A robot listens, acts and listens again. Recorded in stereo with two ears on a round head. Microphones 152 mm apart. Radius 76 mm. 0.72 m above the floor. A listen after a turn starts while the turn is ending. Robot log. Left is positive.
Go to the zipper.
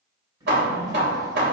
note: The zipper: about 25° right or 155° right.
cmd yaw -25
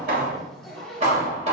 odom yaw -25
cmd fwd 1.0
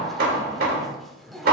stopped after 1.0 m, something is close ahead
end: Arrived at the zipper, straight ahead.